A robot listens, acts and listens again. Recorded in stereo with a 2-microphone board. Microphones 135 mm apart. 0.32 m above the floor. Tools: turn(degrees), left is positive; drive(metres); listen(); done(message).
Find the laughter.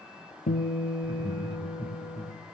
turn(degrees=-35)
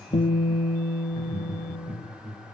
turn(degrees=-115)
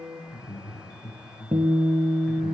done("Facing the laughter.")